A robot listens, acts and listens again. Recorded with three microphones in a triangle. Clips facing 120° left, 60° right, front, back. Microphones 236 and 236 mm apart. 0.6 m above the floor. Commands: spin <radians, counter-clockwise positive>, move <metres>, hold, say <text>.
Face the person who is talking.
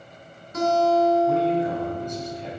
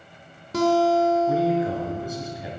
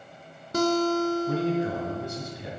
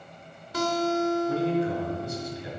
spin 0.44
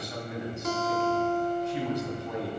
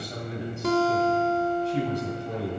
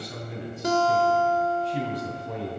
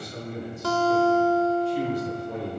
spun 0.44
say Facing the man speaking, 2 to 4 m away.